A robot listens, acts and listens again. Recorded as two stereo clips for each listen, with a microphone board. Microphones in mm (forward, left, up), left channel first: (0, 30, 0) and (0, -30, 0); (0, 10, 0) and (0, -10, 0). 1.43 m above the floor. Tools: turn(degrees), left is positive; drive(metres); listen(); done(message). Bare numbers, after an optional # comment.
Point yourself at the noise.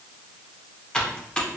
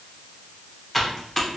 turn(30)
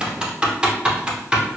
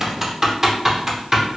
# So it is at 15° right.
turn(-15)
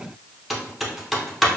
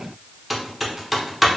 done("Facing the typing on a keyboard, under 1 m away.")